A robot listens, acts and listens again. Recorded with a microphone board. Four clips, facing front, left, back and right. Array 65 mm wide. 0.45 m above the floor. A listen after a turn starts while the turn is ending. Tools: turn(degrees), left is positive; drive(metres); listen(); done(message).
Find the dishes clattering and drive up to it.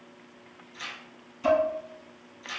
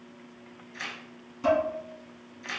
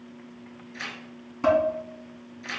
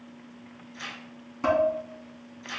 turn(degrees=-145)
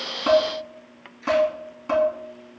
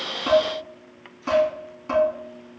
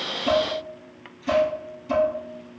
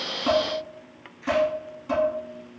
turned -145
turn(degrees=20)
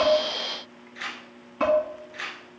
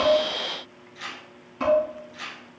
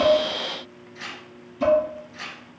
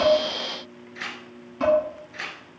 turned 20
drive(metres=1.0)
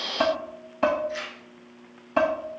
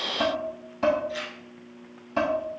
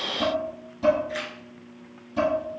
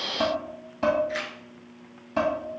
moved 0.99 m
drive(metres=1.0)
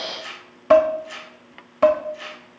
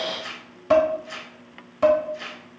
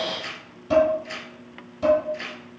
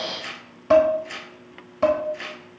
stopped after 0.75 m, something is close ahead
done("I am next to the dishes clattering.")